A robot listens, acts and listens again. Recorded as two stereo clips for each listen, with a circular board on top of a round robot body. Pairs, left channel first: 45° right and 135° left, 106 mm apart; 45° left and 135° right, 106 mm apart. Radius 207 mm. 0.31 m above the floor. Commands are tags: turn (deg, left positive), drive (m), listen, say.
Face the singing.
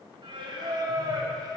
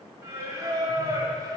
<turn deg="180"/>
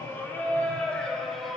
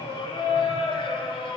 <turn deg="45"/>
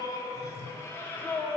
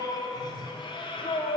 <turn deg="25"/>
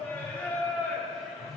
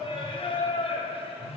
<turn deg="40"/>
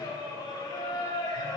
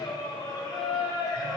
<say>Facing the singing, 2 to 4 m away.</say>